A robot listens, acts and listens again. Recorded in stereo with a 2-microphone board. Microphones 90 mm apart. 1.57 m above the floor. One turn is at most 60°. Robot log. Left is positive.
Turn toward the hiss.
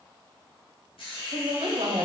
cmd yaw +60
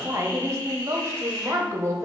note: So it is at 30° left.
cmd yaw +30
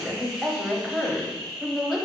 end: Facing the hiss.